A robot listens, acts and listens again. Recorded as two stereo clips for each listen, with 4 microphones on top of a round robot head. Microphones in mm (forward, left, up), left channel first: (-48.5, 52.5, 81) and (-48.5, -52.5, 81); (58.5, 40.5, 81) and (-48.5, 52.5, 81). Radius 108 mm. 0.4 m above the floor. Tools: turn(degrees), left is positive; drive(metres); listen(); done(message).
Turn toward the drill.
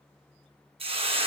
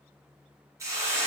listen()
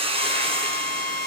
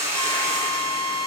turn(degrees=-70)
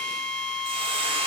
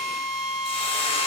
done("Facing the drill, over 4 m away.")